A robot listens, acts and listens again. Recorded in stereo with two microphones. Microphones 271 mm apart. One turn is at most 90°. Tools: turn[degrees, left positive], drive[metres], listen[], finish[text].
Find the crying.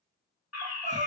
Thought: The crying: about 25° right or 155° right.
Action: turn[-25]
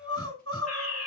Thought: So it is at 125° right.
Action: turn[-90]
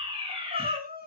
Thought: The crying is now 35° right.
Action: turn[-35]
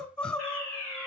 Action: finish[Found it: crying, straight ahead, 2 to 4 m away.]